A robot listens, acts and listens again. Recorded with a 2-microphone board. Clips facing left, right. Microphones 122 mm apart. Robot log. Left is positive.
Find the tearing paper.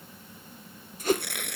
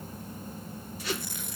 note: The tearing paper: about 70° left or 110° left.
cmd yaw +70
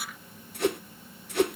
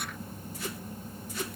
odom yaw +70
cmd idle
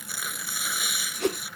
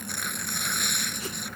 end: Found it: tearing paper, straight ahead.